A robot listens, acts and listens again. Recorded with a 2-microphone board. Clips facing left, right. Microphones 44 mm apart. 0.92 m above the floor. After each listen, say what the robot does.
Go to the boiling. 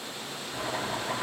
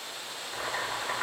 Turn 25° right.
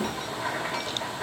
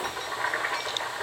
Turn 130° right.
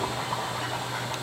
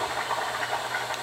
Turn 55° right.
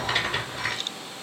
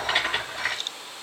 Turn 20° right.
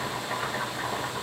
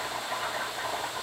Turn 10° left.
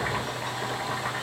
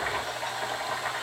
Drive 1.0 m forward.
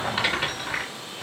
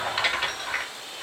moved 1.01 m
Drive 1.0 m forward.
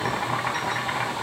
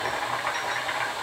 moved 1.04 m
Drive 1.0 m forward.
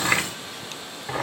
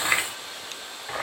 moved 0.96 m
Drive 1.0 m forward.
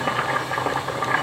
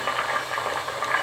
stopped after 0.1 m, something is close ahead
I am next to the boiling.